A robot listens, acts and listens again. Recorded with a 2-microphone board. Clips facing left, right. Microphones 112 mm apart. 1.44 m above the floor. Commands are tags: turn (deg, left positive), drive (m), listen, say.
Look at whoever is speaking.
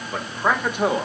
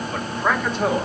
<turn deg="15"/>
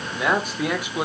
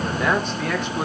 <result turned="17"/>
<turn deg="30"/>
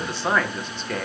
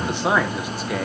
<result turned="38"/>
<say>Facing the man speaking, 1 to 2 m away.</say>